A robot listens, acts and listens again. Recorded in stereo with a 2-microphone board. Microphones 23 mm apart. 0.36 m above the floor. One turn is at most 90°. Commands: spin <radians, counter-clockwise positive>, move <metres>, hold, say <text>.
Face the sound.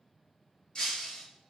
spin 0.52
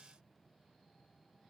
hold
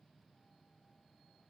say I heard breaking glass, but can't make it out now. It was about straight ahead or 120° left.